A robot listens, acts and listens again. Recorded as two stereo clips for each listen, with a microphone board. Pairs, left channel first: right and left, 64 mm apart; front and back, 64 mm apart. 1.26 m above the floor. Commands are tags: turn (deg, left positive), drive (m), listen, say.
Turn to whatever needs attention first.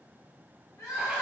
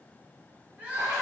<turn deg="-115"/>
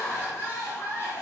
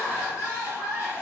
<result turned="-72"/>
<turn deg="-45"/>
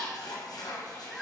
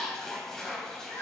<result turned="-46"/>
<say>Facing the crying, 1 to 2 m away.</say>